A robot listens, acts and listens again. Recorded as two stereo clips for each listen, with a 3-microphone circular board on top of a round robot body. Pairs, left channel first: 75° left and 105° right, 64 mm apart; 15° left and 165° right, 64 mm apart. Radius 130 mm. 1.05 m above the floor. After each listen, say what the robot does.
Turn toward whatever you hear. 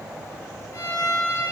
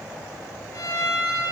Turn 50° left.
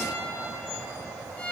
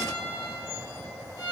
Found it: a violin, straight ahead, 1 to 2 m away.